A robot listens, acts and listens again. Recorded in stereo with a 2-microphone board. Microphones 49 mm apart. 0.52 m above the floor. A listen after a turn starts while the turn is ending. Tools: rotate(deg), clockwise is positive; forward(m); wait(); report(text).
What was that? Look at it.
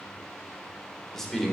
rotate(-30)
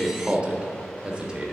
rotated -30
rotate(25)
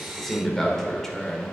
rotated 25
rotate(-10)
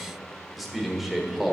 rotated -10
report("Facing the man speaking, 1 to 2 m away.")